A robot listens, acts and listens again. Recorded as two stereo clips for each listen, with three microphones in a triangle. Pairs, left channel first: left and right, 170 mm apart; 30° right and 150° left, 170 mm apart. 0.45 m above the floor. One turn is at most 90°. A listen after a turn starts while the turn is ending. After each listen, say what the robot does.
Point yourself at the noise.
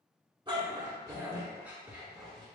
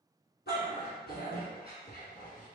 Facing the dog barking, 1 to 2 m away.